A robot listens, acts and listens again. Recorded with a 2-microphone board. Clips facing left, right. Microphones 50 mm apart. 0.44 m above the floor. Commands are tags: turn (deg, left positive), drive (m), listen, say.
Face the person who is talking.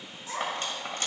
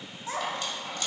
<turn deg="-35"/>
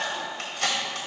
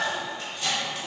<turn deg="-110"/>
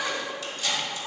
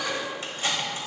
<turn deg="25"/>
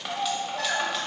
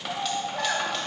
<turn deg="-10"/>
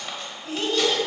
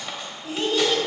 <say>Facing the child speaking.</say>